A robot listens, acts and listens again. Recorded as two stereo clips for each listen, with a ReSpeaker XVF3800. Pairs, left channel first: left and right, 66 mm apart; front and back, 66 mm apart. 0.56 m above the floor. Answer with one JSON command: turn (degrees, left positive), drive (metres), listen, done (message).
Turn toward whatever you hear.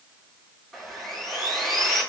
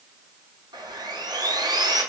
{"turn": 175}
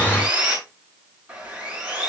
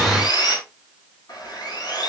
{"turn": -20}
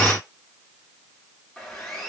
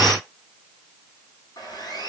{"done": "Facing the sawing."}